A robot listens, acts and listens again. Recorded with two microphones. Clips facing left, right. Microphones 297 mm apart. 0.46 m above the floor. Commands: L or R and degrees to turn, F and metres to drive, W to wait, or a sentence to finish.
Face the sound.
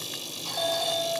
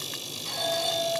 R25
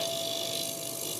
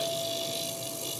W
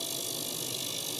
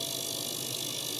W
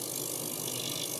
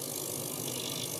I heard a doorbell, but can't make it out now. It was about straight ahead or 130° right.